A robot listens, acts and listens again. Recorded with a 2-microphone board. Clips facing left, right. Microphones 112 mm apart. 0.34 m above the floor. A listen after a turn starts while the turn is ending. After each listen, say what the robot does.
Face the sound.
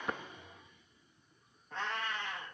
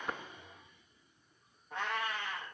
Turn 30° left.
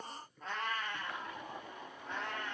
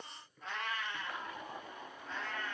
Turn 110° left.
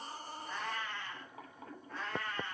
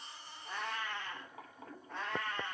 Turn 25° right.
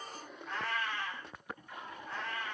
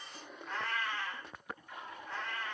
Found it: a cat meowing, straight ahead.